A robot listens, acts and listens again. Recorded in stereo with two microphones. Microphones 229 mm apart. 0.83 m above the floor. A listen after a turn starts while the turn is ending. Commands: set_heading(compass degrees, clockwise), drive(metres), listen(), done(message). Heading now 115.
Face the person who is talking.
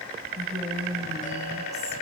set_heading(145)
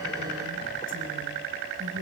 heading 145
set_heading(265)
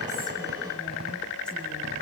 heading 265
listen()
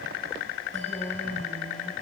done("Found it: a woman speaking, straight ahead, over 4 m away.")